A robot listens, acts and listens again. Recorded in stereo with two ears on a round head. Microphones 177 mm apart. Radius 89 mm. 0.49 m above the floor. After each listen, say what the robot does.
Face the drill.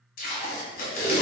Keep listening.
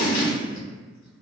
Keep listening.
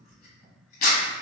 I can't make out a drill, only tape being pulled.